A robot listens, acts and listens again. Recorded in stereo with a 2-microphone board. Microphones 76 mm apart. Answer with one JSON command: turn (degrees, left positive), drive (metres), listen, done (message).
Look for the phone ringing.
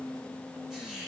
{"listen": true}
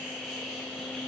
{"listen": true}
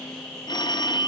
{"turn": 70}
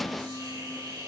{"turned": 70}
{"listen": true}
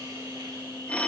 {"turn": 15}
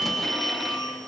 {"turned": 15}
{"done": "Facing the phone ringing, under 1 m away."}